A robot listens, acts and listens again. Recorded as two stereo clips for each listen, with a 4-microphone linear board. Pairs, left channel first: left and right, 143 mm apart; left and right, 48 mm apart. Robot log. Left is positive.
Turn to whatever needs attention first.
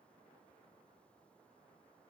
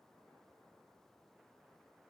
cmd idle
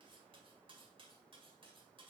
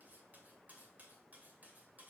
cmd idle
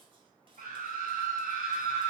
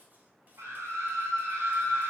note: The scream: about 75° right or 105° right.
cmd yaw -75
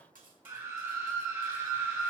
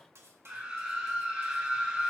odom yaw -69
note: So it is at 20° right.
cmd yaw -20
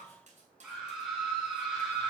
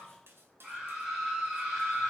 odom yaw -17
end: Found it: a scream, straight ahead, 2 to 4 m away.